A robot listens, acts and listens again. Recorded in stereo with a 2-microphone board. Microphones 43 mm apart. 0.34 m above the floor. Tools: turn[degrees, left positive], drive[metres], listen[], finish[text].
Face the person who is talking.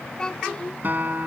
Thought: The child speaking: about 15° left or 165° left.
Action: turn[15]
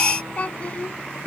Thought: So it is at 150° left.
Action: turn[150]
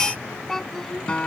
Thought: The child speaking is now 10° left.
Action: turn[10]
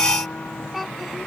Action: finish[Found it: a child speaking, straight ahead.]